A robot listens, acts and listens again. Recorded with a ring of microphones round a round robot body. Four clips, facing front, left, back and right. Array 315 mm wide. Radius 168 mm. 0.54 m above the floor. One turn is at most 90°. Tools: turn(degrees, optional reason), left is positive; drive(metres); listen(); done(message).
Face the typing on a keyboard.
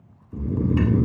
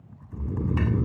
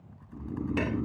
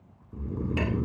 turn(degrees=90, reason="The typing on a keyboard: 105° left.")
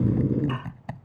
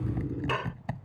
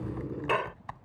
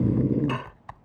turn(degrees=45, reason="The typing on a keyboard is now 45° left.")
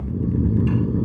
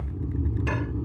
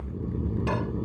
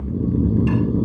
listen()
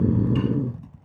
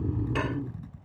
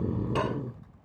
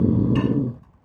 turn(degrees=35, reason="The typing on a keyboard is now 35° left.")
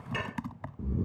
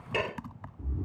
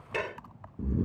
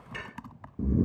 done("Found it: typing on a keyboard, straight ahead.")